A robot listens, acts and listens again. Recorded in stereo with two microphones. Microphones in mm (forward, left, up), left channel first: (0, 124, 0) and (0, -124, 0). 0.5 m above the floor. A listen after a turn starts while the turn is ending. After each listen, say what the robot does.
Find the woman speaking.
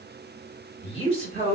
Turn 30° right.
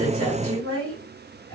Turn 120° right.
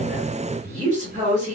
Turn 30° right.
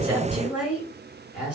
Found it: a woman speaking, straight ahead, 2 to 4 m away.